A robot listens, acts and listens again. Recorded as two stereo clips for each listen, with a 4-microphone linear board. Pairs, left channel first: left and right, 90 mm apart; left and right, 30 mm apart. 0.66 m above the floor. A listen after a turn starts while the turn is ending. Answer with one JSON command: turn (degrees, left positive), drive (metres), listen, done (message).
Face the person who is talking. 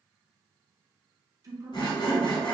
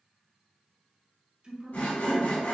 {"turn": -35}
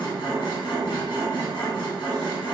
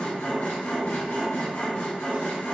{"listen": true}
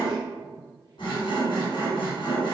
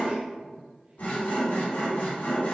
{"listen": true}
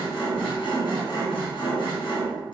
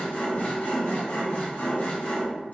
{"done": "I heard a man speaking, but can't make it out now. It was about straight ahead or 110° right."}